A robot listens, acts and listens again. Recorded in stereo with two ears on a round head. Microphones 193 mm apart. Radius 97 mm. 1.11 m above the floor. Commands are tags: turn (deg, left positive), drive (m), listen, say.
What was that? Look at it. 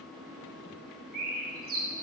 <turn deg="-40"/>
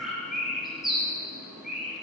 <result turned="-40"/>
<say>Facing the bird, 1 to 2 m away.</say>